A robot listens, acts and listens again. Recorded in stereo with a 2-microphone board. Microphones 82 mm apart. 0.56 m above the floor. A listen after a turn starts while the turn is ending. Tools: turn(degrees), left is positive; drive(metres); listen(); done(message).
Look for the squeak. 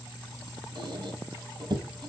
turn(degrees=-55)
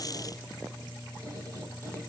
listen()
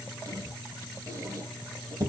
turn(degrees=-50)
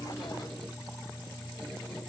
listen()
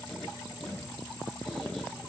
done("Found it: a squeak, straight ahead.")